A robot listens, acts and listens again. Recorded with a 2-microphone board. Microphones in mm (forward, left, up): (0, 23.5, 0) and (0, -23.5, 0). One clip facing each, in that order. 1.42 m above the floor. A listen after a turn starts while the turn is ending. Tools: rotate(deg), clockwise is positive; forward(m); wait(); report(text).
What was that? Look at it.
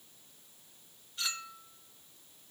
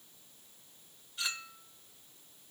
rotate(30)
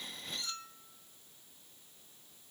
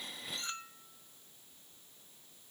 rotate(145)
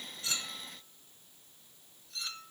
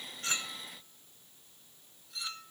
rotate(10)
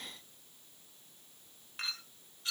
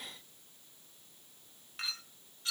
report("Facing the clink, 1 to 2 m away.")